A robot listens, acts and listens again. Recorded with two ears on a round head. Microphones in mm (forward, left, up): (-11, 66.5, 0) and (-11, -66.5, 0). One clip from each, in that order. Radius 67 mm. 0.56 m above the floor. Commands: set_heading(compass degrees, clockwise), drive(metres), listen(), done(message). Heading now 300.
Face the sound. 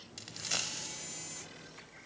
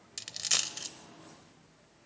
set_heading(350)
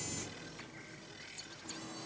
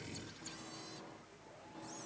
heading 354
listen()
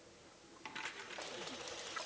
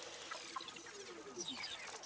done("I heard a dropped coin, but can't make it out now. It was about 5° left or 80° right.")